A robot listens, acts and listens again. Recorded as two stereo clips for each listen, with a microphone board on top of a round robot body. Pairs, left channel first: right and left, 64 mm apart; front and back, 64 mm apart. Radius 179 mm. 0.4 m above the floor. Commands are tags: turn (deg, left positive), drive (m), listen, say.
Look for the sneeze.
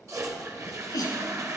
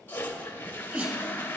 <turn deg="-120"/>
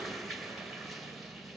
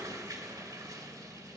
<say>Facing where the sneeze came from. I can't hear it now.</say>